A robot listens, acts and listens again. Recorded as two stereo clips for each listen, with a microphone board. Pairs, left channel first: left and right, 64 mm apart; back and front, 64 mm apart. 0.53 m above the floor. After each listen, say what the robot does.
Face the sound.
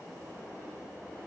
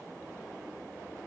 Keep listening.
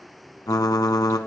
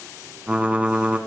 Turn 70° left.
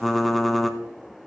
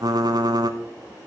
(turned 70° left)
Facing the typing on a keyboard.